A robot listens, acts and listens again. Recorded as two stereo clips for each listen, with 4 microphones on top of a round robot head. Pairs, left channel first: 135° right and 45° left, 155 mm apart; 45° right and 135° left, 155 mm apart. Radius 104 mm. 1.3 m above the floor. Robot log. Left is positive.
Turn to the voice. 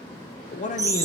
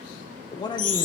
note: The man speaking: 105° right.
cmd yaw -105
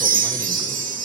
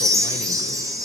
cmd idle
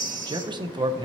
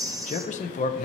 note: The man speaking is now 15° right.
cmd yaw -15
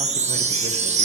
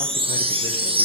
cmd idle
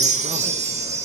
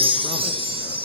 cmd idle
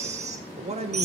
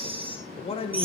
end: Facing the man speaking.